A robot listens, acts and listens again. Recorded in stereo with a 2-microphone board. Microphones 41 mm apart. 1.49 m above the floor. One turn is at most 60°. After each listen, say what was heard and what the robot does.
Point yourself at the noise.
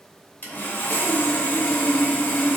The sawing: about 45° left or 135° left. Turn 45° left.
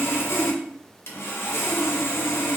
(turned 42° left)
So it is at 85° left. Turn 60° left.
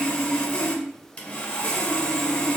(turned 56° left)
The sawing is now 30° left. Turn 30° left.
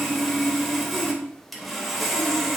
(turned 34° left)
Found it: sawing, straight ahead, under 1 m away.